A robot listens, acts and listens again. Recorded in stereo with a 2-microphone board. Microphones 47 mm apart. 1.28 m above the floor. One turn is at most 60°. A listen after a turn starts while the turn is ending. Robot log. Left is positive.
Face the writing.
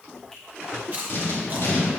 note: The writing: about 55° left or 125° left.
cmd yaw +55
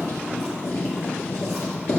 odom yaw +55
note: So it is at 65° left.
cmd yaw +60
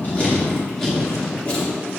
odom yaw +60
note: The writing is now 10° left.
cmd yaw +10
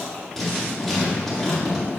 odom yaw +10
end: Facing the writing, 1 to 2 m away.